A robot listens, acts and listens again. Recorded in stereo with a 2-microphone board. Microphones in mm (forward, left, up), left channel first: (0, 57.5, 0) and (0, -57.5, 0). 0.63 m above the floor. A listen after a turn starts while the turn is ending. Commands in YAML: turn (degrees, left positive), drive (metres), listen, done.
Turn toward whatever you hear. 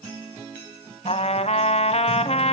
turn: 65
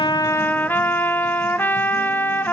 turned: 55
turn: 20
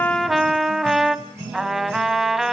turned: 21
done: "Found it: a trumpet, straight ahead."